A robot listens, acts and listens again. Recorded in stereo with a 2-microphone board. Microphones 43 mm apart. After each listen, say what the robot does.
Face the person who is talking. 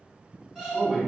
Turn 20° right.
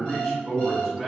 Facing the man speaking.